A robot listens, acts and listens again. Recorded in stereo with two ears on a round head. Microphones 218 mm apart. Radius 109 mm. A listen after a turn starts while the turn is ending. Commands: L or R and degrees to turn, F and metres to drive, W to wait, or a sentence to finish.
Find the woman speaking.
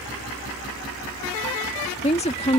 L25
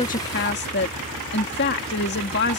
L120
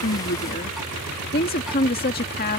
L45
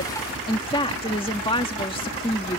L25
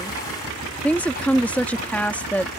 Facing the woman speaking.